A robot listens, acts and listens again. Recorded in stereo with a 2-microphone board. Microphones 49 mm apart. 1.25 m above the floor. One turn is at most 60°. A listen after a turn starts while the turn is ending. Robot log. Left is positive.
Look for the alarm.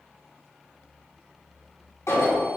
note: The alarm: about 75° left or 105° left.
cmd yaw +60
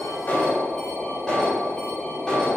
note: So it is at 15° left.
cmd yaw +15
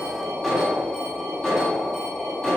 end: Facing the alarm, 2 to 4 m away.